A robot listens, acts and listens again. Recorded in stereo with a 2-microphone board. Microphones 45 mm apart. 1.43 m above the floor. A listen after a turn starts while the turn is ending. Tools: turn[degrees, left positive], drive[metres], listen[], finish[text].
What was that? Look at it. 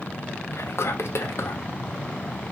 Thought: The whispering: about 65° left or 115° left.
Action: turn[65]
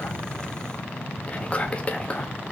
Thought: So it is at 30° left.
Action: turn[30]
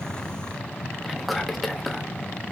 Action: finish[Facing the whispering.]